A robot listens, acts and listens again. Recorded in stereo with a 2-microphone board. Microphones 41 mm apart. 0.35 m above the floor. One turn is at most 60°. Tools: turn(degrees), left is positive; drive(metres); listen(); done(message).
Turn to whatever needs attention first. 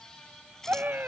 turn(degrees=-45)
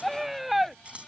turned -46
done("Found it: a scream, straight ahead.")